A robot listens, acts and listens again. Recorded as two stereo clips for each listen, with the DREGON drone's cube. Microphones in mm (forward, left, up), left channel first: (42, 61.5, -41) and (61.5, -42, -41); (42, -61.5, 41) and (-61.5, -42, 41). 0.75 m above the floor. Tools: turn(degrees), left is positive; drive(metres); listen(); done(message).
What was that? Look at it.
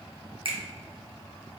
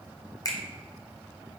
turn(degrees=-65)
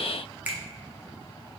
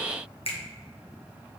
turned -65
turn(degrees=-10)
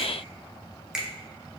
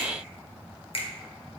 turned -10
done("Facing the finger snap, under 1 m away.")